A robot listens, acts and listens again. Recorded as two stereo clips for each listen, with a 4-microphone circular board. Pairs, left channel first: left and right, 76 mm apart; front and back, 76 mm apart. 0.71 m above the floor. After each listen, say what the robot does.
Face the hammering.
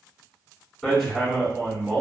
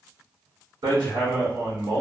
Turn 175° left.
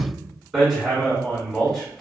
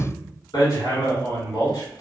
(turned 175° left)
Found it: hammering, straight ahead, 1 to 2 m away.